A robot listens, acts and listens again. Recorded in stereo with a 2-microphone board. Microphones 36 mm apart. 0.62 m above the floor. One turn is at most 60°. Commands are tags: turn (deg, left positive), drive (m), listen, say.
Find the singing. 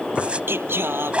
<turn deg="-60"/>
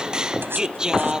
<turn deg="-15"/>
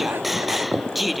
<say>Found it: singing, straight ahead.</say>